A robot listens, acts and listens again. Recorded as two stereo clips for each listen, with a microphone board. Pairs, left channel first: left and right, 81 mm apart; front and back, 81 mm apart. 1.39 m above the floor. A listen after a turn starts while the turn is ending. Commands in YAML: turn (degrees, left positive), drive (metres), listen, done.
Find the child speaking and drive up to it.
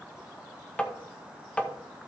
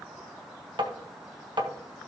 listen: true
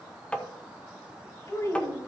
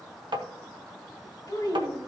turn: 45
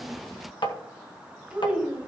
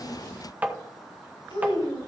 turn: -10
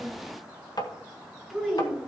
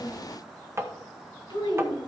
drive: 1.0
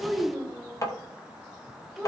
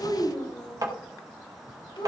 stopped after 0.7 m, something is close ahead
done: "Something is in my way. I am facing the child speaking but have not reached it."